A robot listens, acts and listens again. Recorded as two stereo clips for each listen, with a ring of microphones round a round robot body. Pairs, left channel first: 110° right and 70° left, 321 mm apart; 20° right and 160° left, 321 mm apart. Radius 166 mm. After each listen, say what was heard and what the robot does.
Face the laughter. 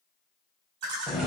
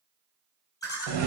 The laughter: 60° left. Turn 60° left.
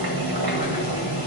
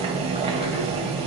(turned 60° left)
Keep listening.
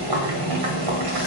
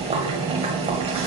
Keep listening.
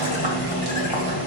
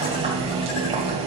Facing where the laughter came from. I can't hear it now.